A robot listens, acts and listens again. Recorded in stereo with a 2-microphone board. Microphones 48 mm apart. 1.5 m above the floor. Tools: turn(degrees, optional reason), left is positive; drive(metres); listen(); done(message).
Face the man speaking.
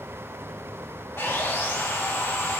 listen()
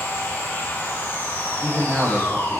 turn(degrees=-25, reason="The man speaking: about 25° right or 155° right.")
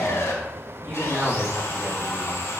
turn(degrees=-130, reason="So it is at 130° right.")
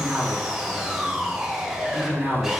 turn(degrees=-15, reason="The man speaking is now 15° right.")
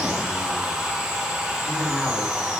listen()
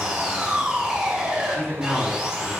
done("Found it: a man speaking, straight ahead, over 4 m away.")